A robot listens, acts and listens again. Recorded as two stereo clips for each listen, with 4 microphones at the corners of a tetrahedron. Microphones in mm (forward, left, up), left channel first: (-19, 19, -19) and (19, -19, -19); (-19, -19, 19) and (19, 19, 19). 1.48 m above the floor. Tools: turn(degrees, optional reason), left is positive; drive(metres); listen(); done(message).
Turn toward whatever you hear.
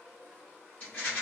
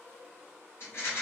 turn(degrees=-170, reason="The rattle: 170° right.")
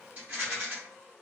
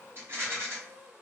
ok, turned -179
turn(degrees=10, reason="The rattle is now 10° left.")
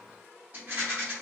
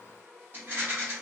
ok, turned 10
done("Facing the rattle, 1 to 2 m away.")